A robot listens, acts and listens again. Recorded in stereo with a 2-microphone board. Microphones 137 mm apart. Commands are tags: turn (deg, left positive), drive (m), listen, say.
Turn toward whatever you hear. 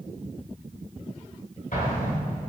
<turn deg="70"/>
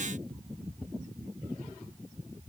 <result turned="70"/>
<listen/>
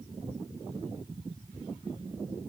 <say>I heard an explosion, but can't make it out now. It was about straight ahead or 40° left.</say>